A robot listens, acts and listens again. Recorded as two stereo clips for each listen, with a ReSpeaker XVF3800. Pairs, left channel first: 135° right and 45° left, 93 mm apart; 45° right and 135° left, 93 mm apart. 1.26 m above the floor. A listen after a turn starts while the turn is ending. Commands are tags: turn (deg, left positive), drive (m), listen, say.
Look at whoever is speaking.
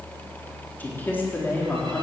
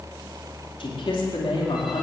<turn deg="-65"/>
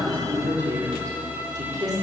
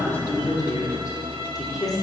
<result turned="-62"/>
<say>Found it: a man speaking, straight ahead.</say>